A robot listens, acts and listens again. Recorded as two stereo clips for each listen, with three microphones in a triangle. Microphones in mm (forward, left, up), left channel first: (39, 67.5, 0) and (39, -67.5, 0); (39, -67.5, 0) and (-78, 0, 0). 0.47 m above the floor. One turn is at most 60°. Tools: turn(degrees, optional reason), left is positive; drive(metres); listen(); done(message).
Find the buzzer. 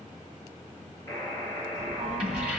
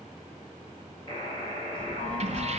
turn(degrees=20, reason="The buzzer: 20° left.")
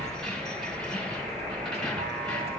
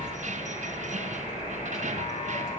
listen()
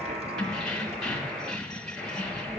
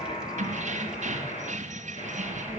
done("Facing the buzzer, 2 to 4 m away.")